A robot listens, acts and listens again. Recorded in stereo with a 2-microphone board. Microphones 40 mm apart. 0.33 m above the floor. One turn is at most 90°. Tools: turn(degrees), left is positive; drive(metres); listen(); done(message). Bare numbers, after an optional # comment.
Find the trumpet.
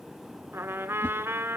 turn(-90)
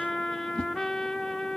# So it is at 10° left.
turn(10)
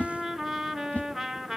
done("Facing the trumpet, under 1 m away.")